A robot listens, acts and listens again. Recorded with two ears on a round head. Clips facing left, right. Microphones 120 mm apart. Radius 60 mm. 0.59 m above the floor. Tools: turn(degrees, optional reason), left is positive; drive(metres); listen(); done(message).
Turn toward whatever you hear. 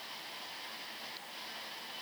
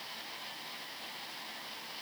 listen()
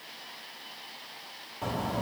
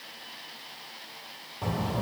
turn(degrees=30)
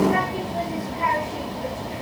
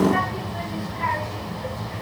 turn(degrees=150, reason="So it is at 150° left.")
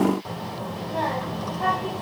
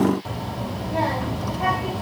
done("Facing the child speaking, 2 to 4 m away.")